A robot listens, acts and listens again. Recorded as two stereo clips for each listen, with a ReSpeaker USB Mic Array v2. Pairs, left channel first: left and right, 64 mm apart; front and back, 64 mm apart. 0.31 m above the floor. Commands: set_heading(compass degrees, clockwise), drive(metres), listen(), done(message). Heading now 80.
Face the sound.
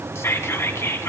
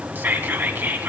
set_heading(315)
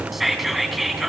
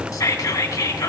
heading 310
done("Facing the whispering, 2 to 4 m away.")